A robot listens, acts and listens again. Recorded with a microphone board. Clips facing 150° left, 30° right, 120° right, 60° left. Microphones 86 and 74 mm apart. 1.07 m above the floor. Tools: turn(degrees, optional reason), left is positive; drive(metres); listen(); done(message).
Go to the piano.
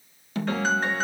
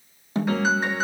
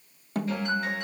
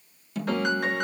turn(degrees=50, reason="The piano: 50° left.")
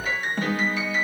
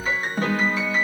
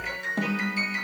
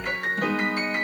turn(degrees=25, reason="The piano is now 25° left.")
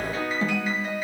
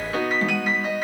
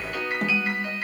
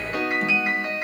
turn(degrees=-10, reason="The piano is now 10° right.")
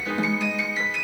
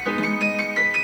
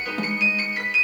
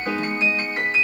drive(metres=1.0)
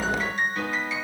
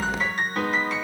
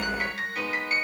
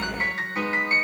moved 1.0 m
drive(metres=1.0)
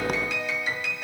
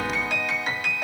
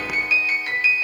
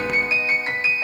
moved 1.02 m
drive(metres=1.0)
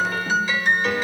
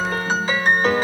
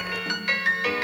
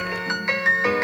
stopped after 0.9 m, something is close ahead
done("I am next to the piano.")